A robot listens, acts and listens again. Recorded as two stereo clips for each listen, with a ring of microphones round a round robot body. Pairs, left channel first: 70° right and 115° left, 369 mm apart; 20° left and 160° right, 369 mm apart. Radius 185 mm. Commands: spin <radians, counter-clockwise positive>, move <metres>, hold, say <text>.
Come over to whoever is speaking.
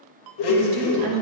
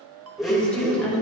spin 1.92
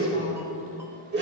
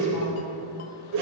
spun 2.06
spin -0.17
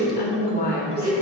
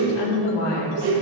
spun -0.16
move 1.0
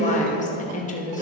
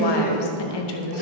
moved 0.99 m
move 1.0
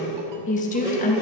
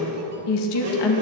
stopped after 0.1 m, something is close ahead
say I am next to the woman speaking.